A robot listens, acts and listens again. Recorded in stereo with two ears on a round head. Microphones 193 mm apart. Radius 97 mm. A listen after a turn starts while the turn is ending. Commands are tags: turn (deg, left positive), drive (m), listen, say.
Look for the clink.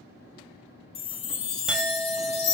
<turn deg="-30"/>
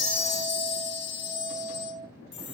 <turn deg="-145"/>
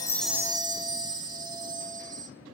<listen/>
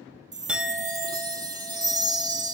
<say>Facing the clink.</say>